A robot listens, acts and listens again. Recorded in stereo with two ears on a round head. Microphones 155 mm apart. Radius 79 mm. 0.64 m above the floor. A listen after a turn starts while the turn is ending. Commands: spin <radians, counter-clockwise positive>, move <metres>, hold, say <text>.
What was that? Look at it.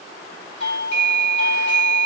spin 0.70
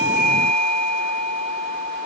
spin 1.66
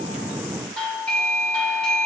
say Found it: a doorbell, straight ahead.